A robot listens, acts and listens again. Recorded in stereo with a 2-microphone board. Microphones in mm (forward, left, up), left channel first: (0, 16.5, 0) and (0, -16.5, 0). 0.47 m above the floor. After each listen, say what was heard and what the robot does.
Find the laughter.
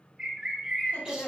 The laughter: about 55° left or 125° left. Turn 55° left.
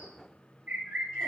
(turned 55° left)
Keep listening.
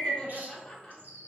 So it is at 15° left. Turn 15° left.
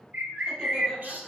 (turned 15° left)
Keep listening.
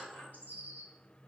Facing the laughter.